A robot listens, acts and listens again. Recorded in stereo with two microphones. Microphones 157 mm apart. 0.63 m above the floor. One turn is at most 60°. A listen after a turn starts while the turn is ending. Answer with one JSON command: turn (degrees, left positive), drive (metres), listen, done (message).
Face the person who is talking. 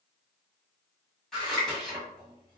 {"listen": true}
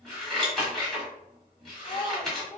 {"turn": 45}
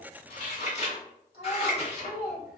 {"turn": 60}
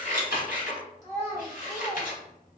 {"turn": 25}
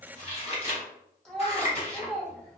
{"done": "Facing the child speaking, 1 to 2 m away."}